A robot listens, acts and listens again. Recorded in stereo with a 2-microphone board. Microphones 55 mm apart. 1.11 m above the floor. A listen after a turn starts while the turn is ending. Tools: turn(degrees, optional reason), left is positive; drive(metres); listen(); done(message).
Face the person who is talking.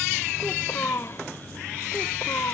turn(degrees=65, reason="The child speaking: about 65° left or 115° left.")
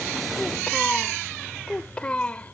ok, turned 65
turn(degrees=25, reason="So it is at 25° left.")
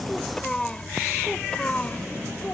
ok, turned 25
turn(degrees=20, reason="The child speaking is now 20° left.")
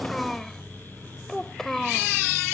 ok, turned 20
done("Facing the child speaking.")